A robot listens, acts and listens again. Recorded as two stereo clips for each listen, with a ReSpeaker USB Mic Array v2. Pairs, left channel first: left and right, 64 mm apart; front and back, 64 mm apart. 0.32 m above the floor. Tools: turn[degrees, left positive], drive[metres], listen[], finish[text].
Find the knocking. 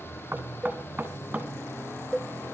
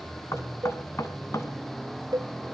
Thought: The knocking: 30° right.
Action: turn[-30]
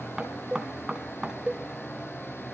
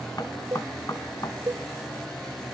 Thought: The knocking is now 15° right.
Action: turn[-15]
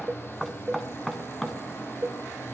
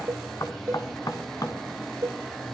Action: finish[Facing the knocking, 2 to 4 m away.]